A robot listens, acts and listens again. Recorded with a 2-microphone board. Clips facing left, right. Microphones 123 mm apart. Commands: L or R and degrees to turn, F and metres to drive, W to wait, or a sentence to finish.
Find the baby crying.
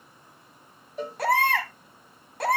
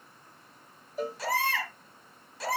L55
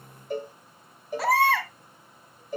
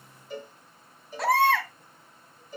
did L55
Facing the baby crying.